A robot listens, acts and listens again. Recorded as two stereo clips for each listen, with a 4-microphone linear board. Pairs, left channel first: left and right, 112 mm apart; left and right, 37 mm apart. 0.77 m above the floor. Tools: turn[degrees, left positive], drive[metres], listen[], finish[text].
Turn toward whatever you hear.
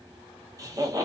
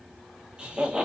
Thought: The laughter: about 30° right or 150° right.
Action: turn[-30]
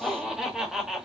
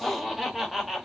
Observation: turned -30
Action: finish[Found it: laughter, straight ahead.]